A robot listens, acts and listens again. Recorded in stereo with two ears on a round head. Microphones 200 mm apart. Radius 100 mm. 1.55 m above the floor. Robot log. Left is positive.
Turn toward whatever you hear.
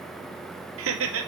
note: The laughter: about 65° right or 115° right.
cmd yaw -65
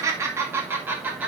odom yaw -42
end: Facing the laughter.